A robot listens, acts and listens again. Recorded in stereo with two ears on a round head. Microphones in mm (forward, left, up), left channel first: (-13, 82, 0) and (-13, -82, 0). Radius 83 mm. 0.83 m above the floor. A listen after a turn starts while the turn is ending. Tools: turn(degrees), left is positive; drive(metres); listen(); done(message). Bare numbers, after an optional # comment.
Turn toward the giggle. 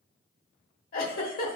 # The giggle: about 55° left or 125° left.
turn(55)
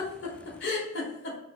# So it is at 70° left.
turn(70)
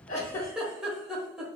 done("Facing the giggle.")